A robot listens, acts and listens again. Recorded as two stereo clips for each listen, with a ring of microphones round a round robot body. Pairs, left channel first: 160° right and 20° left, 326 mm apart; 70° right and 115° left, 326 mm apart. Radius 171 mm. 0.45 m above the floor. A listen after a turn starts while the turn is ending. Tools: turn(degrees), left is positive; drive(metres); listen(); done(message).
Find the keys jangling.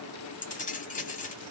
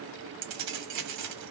turn(degrees=135)
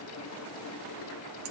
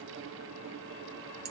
listen()
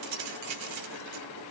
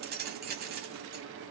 turn(degrees=55)
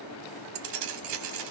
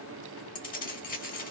done("Found it: keys jangling, straight ahead.")